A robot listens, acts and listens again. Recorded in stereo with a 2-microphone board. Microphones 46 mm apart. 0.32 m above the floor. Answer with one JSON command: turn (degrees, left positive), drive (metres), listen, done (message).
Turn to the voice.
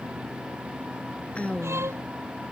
{"turn": 30}
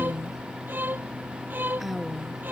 {"done": "Facing the woman speaking."}